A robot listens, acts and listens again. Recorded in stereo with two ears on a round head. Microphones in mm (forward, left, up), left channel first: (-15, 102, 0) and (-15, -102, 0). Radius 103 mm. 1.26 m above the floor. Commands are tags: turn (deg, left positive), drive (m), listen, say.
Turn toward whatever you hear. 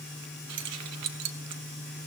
<turn deg="-90"/>
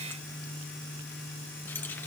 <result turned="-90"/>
<listen/>
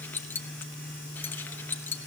<turn deg="10"/>
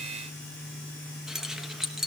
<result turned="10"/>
<say>Found it: keys jangling, straight ahead.</say>